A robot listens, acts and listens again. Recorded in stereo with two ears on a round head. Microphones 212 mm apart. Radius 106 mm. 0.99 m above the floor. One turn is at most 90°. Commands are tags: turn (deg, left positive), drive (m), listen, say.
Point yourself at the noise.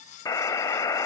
<turn deg="15"/>
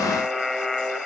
<say>Found it: a buzzer, straight ahead.</say>